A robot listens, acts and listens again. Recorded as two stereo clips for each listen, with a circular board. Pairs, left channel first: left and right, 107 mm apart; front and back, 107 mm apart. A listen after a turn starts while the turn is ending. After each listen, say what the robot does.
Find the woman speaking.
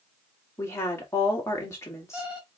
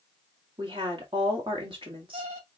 Turn 150° left.
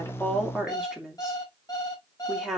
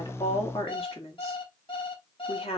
Facing the woman speaking, 2 to 4 m away.